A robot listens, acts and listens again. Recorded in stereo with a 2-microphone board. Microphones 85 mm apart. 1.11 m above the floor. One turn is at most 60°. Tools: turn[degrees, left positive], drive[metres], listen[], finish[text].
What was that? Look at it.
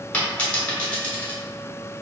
Thought: The dropped coin: about 15° left or 165° left.
Action: turn[15]
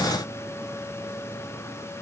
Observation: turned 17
Action: listen[]
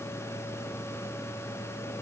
Action: finish[I heard a dropped coin, but can't make it out now. It was about straight ahead or 145° left.]